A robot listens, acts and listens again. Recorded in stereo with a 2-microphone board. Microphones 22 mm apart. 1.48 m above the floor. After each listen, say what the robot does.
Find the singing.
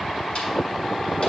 Keep listening.
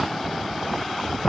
Keep listening.
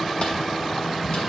I can't make out singing.